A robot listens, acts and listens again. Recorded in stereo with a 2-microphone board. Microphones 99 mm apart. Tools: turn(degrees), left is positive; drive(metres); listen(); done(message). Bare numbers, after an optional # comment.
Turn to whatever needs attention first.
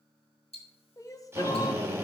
# The crying: about 35° left or 145° left.
turn(35)
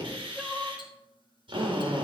done("Found it: crying, straight ahead.")